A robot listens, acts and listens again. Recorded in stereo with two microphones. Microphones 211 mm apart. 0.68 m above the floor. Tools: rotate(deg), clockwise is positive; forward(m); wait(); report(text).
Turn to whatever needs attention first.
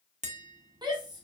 rotate(20)
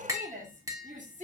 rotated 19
rotate(145)
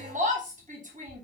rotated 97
rotate(40)
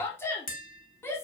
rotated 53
rotate(-10)
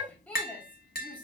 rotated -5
report("Facing the shout, 1 to 2 m away.")